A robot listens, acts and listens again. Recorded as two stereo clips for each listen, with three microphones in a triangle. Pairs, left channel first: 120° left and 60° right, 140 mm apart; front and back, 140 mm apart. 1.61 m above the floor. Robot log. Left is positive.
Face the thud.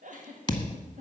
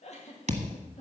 note: The thud: 170° left.
cmd yaw +170
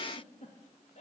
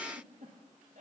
end: I heard a thud from this way, but can't make it out now.